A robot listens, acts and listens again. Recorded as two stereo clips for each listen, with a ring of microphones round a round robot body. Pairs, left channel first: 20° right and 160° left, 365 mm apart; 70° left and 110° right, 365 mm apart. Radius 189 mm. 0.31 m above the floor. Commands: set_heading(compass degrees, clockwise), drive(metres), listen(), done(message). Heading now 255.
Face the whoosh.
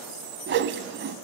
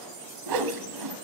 set_heading(35)
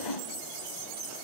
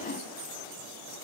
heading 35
done("Found it: a whoosh, straight ahead.")